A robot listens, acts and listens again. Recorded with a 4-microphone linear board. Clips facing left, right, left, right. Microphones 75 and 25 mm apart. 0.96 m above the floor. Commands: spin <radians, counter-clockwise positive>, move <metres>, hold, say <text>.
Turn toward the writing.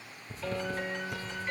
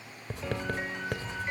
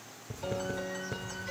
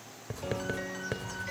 spin -1.57
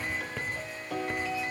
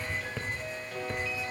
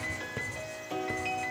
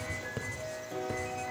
say Found it: writing, straight ahead, 2 to 4 m away.